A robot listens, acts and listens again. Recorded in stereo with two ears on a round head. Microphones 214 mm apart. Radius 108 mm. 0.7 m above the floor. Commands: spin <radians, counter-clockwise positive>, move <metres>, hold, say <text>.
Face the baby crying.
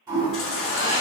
spin 1.05
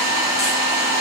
hold
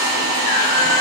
spin 1.05
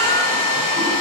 hold
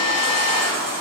spin -0.17
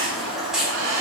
say Facing the baby crying.